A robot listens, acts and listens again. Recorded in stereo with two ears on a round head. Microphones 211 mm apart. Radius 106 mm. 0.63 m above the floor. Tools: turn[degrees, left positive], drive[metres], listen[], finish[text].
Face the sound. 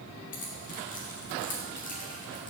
Thought: The keys jangling: about 35° left or 145° left.
Action: turn[35]
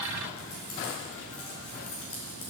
Thought: So it is at 110° left.
Action: turn[110]
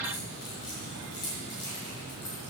Thought: The keys jangling is now 20° left.
Action: turn[20]
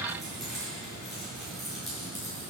Action: finish[Found it: keys jangling, straight ahead, over 4 m away.]